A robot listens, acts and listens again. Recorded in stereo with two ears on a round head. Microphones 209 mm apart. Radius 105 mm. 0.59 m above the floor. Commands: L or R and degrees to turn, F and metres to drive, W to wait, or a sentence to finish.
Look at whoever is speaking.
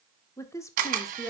L30
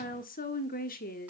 L135
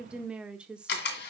Facing the woman speaking.